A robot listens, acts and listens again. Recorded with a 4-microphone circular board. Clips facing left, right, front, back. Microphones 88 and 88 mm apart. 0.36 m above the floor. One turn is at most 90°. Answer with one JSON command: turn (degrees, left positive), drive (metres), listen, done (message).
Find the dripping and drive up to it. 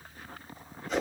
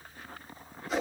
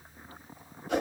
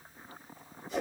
{"listen": true}
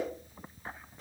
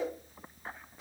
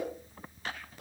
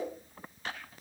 {"listen": true}
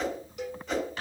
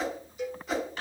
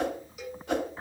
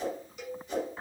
{"done": "I can't make out dripping to turn to."}